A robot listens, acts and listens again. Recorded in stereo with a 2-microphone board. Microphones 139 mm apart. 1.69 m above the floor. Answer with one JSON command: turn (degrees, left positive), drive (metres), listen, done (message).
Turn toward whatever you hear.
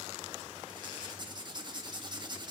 {"turn": -35}
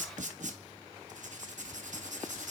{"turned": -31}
{"turn": -115}
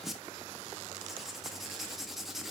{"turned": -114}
{"done": "Found it: writing, straight ahead, 1 to 2 m away."}